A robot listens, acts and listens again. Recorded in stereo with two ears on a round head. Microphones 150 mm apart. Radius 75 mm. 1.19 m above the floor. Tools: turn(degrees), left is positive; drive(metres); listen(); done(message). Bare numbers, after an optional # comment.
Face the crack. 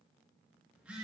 listen()
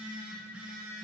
listen()
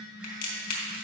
# The crack: about 55° left or 125° left.
turn(55)
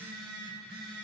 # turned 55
listen()
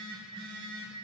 done("I heard a crack, but can't make it out now. It was about straight ahead or 70° left.")